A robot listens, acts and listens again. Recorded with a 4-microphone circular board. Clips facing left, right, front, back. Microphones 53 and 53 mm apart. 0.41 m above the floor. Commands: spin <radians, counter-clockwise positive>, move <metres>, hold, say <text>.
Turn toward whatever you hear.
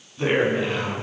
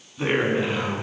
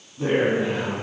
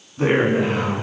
spin -2.88
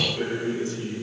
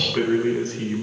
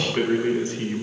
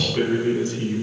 spin -0.96
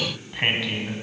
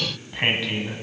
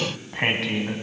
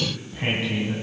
say Found it: a man speaking, straight ahead.